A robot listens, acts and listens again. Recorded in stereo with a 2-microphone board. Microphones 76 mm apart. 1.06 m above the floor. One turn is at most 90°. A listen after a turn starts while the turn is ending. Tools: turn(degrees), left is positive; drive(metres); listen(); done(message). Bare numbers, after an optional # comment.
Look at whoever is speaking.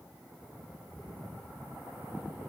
listen()
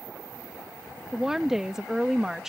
turn(-30)
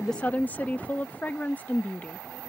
# So it is at 20° left.
turn(20)
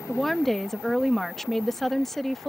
done("Found it: a woman speaking, straight ahead.")